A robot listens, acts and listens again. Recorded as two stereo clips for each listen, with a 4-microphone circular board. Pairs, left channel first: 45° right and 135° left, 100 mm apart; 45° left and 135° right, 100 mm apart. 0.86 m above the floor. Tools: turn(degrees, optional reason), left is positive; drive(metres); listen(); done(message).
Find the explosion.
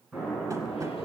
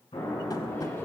turn(degrees=50, reason="The explosion: 50° left.")
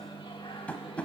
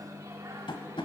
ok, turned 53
done("Facing where the explosion came from. I can't hear it now.")